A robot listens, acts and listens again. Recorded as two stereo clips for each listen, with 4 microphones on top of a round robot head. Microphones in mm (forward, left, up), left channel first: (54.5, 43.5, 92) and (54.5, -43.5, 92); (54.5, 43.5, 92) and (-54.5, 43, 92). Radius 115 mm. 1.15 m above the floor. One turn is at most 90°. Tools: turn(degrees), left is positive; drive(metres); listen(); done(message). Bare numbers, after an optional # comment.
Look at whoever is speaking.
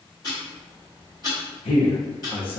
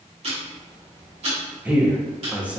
# The man speaking: 100° left.
turn(90)
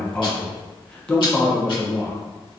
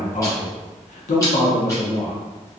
# The man speaking is now 10° left.
turn(10)
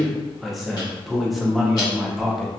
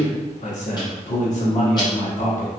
done("Facing the man speaking.")